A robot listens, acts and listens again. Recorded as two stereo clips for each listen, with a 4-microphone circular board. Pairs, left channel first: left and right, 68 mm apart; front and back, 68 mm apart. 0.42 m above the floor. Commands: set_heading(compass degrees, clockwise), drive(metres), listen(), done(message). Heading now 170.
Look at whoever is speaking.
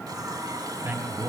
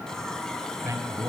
set_heading(320)
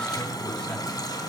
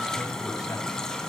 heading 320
listen()
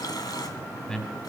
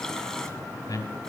set_heading(310)
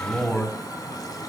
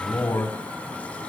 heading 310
done("Facing the man speaking, 2 to 4 m away.")